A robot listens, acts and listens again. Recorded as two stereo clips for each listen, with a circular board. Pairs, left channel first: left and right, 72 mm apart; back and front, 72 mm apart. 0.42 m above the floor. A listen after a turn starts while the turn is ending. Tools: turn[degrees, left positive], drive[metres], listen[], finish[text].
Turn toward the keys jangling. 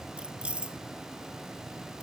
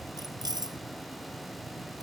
Thought: The keys jangling: 15° right.
Action: turn[-15]
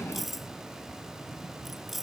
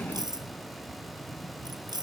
Action: finish[Found it: keys jangling, straight ahead.]